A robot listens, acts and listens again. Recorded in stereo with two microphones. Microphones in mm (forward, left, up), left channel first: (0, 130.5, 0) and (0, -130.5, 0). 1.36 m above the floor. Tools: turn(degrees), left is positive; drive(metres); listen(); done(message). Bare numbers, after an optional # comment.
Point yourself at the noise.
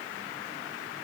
listen()
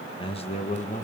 # The man speaking: about 30° left or 150° left.
turn(30)
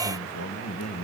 # So it is at 105° left.
turn(105)
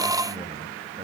listen()
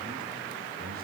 listen()
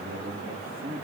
# The man speaking is now 35° right.
turn(-35)
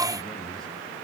listen()
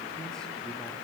listen()
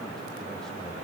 done("I heard a man speaking from this way, but can't make it out now.")